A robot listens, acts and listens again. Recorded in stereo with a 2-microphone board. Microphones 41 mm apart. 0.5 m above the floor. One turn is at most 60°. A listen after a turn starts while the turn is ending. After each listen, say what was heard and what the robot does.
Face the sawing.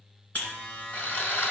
The sawing: about 50° left or 130° left. Turn 50° left.
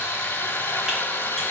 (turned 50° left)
So it is at 75° left. Turn 60° left.
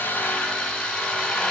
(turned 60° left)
The sawing is now 15° left. Turn 15° left.
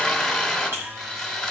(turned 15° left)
Found it: sawing, straight ahead.